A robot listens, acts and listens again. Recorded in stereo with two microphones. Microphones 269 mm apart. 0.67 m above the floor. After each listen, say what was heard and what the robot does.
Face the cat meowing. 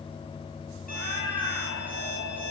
Turn 90° left.
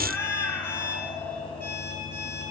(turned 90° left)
Found it: a cat meowing, straight ahead.